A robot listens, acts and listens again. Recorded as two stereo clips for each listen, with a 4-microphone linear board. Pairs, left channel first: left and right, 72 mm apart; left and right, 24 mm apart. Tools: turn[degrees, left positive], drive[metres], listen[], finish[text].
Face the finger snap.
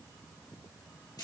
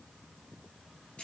Action: listen[]
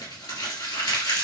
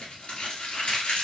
Action: listen[]
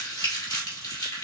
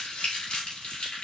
Action: finish[I can't make out a finger snap to turn to.]